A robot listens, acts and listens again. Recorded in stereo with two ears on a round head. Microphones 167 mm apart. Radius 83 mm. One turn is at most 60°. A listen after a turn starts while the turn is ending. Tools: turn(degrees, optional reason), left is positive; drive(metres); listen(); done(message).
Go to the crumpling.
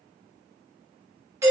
listen()
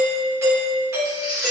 turn(degrees=35, reason="The crumpling: about 35° left or 145° left.")
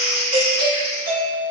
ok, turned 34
drive(metres=1.0)
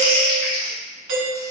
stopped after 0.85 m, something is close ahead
turn(degrees=15, reason="The crumpling is now 15° left.")
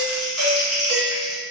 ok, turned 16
done("Arrived at the crumpling, straight ahead.")